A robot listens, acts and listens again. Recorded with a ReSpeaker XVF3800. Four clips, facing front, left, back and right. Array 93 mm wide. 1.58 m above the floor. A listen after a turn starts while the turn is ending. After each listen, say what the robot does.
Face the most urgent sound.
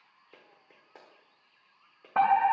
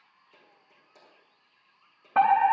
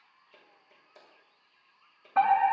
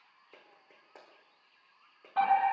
Turn 60° left.
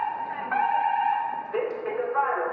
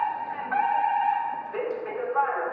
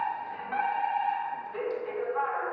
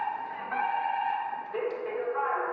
Turn 15° left.
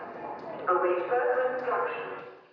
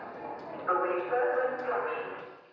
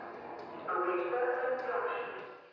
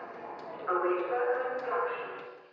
Found it: a fire alarm, straight ahead.